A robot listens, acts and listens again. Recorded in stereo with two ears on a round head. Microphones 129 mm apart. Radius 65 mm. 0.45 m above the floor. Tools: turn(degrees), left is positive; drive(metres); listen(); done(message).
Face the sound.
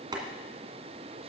turn(degrees=-30)
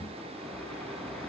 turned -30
done("Facing the boiling.")